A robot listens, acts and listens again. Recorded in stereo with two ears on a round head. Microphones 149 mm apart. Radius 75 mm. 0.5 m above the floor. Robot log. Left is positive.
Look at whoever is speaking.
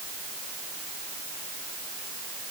cmd idle
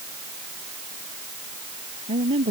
note: The woman speaking: about 35° right or 145° right.
cmd yaw -35
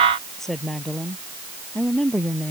end: Facing the woman speaking.